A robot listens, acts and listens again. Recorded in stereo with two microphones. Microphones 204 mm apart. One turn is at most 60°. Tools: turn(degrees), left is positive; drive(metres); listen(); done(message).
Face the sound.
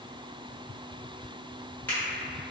turn(degrees=30)
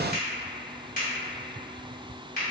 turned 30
turn(degrees=60)
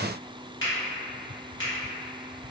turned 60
turn(degrees=60)
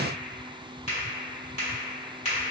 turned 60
turn(degrees=35)
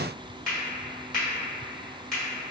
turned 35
done("Facing the finger snap.")